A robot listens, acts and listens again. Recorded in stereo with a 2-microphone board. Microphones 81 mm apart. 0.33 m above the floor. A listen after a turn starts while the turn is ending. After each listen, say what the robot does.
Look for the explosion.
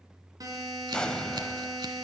Turn 30° left.
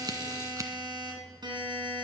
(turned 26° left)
Keep listening.
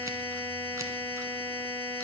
I heard an explosion, but can't make it out now. It was about 15° right or 145° left.